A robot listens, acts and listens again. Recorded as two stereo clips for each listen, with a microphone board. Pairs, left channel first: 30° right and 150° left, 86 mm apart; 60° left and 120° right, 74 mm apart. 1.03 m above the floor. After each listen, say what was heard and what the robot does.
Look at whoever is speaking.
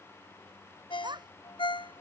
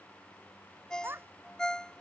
The child speaking: straight behind. Turn 180° left.
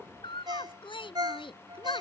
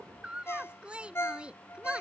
The child speaking is now 45° right. Turn 45° right.
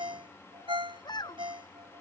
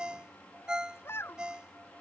Found it: a child speaking, straight ahead.